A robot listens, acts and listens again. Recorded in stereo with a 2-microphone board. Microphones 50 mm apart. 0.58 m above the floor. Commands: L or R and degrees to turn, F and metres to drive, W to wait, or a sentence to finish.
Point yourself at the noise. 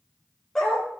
L30
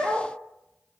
R25
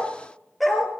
Facing the dog barking.